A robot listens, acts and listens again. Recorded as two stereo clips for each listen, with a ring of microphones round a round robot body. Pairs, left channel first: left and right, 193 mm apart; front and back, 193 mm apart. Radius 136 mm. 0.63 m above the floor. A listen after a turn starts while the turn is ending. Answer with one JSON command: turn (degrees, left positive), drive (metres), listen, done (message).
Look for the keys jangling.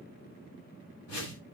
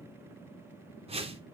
{"listen": true}
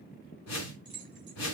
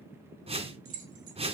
{"turn": -175}
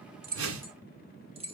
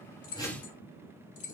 {"turn": -30}
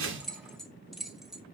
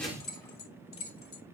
{"done": "Facing the keys jangling."}